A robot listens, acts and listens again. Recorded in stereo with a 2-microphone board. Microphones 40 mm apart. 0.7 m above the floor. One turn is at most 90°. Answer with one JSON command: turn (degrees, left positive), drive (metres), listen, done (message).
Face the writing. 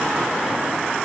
{"listen": true}
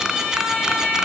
{"listen": true}
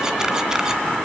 {"done": "I can't make out writing."}